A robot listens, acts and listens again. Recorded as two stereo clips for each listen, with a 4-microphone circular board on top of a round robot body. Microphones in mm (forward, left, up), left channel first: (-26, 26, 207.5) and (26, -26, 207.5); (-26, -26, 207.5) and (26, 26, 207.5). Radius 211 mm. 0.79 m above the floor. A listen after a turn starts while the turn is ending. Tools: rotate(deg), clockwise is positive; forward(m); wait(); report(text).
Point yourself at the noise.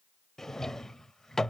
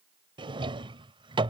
rotate(-50)
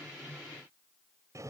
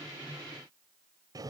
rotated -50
report("Found it: a drawer, straight ahead.")